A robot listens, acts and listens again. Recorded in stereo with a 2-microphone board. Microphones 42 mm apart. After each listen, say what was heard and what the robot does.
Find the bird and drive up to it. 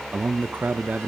Keep listening.
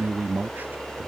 Keep listening.
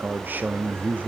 I can't make out a bird, only a man speaking.